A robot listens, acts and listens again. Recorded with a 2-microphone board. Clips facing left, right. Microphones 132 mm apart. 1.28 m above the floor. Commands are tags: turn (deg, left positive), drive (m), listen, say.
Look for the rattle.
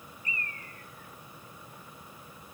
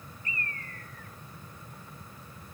<listen/>
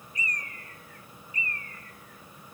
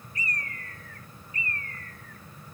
<listen/>
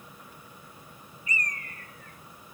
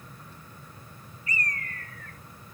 <say>I can't make out a rattle to turn to.</say>